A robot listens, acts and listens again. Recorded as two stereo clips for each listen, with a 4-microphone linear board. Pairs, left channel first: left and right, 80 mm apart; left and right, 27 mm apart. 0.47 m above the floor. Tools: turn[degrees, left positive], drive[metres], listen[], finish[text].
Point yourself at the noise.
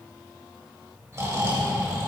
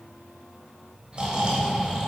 Thought: The snoring: about 40° right or 140° right.
Action: turn[-40]
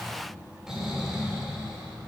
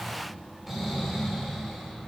Thought: So it is at 10° right.
Action: turn[-10]
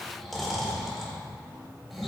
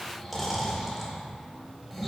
Action: finish[Found it: snoring, straight ahead, 2 to 4 m away.]